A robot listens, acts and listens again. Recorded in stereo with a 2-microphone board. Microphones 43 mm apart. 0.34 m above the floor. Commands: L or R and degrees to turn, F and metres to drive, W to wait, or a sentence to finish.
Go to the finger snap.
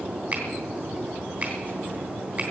R40
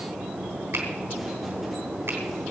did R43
R95
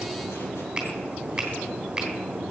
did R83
R10
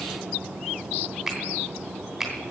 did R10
F1.0
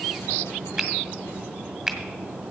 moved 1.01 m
F1.0
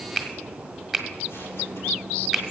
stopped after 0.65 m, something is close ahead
Arrived at the finger snap, straight ahead.